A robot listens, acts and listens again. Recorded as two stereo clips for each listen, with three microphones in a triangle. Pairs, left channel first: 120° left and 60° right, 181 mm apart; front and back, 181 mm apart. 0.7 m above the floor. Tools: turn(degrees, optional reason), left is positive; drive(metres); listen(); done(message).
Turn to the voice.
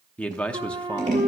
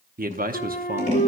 turn(degrees=-155, reason="The man speaking: 155° right.")
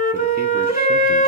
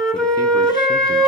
listen()
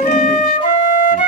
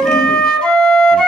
listen()
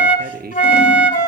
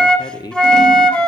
turn(degrees=-65, reason="The man speaking is now 65° right.")
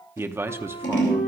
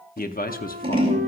turn(degrees=15, reason="The man speaking is now 15° left.")
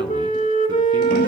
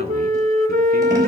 listen()
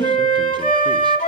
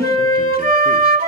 listen()
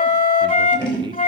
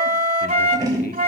done("Facing where the man speaking came from. I can't hear it now.")